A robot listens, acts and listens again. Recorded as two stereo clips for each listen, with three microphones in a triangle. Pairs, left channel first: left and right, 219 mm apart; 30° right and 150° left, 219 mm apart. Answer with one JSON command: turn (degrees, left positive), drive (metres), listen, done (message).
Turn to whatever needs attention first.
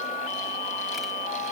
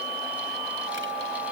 {"listen": true}
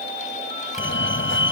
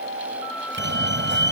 {"turn": 115}
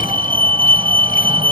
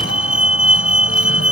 {"turn": -25}
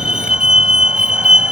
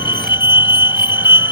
{"done": "Facing the fire alarm."}